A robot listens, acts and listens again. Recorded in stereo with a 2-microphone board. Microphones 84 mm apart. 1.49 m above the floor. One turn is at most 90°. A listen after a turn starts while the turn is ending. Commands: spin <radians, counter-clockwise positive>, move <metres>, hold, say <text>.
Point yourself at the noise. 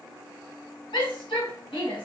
spin 1.57
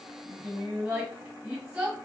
spin -0.17
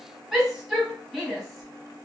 say Facing the shout.